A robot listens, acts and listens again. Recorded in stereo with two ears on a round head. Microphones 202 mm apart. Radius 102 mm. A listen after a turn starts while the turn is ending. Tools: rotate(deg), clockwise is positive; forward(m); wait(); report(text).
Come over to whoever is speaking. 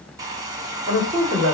rotate(25)
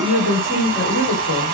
forward(1.0)
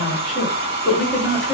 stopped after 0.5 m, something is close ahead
report("Something is in my way. I am facing the woman speaking but have not reached it.")